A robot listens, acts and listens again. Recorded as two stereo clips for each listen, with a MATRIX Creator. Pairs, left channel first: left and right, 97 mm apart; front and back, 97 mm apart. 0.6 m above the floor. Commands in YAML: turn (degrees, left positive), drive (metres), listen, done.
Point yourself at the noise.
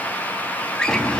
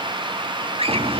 turn: 170
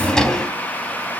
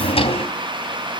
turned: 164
done: "Found it: a drawer, straight ahead, 2 to 4 m away."